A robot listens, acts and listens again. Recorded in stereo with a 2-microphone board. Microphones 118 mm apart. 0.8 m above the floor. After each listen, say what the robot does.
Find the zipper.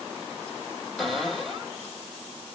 Keep listening.
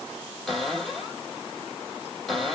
Keep listening.
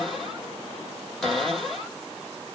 I can't make out a zipper to turn to.